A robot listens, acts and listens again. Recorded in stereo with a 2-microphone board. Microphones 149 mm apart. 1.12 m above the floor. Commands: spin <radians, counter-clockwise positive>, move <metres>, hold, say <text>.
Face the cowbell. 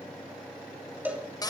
spin -0.52
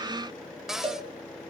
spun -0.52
spin -2.44
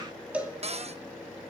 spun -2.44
spin -0.17
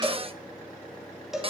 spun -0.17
say Facing the cowbell.